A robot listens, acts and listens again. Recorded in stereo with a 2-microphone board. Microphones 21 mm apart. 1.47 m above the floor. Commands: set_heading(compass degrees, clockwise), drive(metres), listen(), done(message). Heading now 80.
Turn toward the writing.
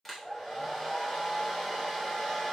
listen()
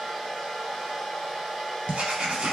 set_heading(170)
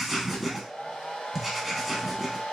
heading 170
done("Found it: writing, straight ahead, 1 to 2 m away.")